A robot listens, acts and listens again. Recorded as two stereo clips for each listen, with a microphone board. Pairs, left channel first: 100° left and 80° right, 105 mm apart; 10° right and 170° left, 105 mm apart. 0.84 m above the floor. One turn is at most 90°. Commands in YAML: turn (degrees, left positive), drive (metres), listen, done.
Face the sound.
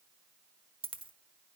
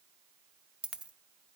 turn: -90
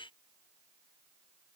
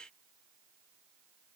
turn: -20
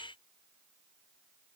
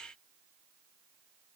done: "I heard a dropped coin from this way, but can't make it out now."